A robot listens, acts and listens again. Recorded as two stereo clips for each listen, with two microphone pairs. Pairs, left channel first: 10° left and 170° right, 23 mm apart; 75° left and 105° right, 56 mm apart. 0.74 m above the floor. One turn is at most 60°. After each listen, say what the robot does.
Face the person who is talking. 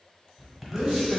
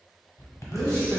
Turn 60° right.
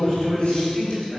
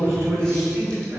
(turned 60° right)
Turn 60° right.
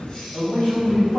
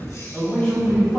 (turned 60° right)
Facing the man speaking.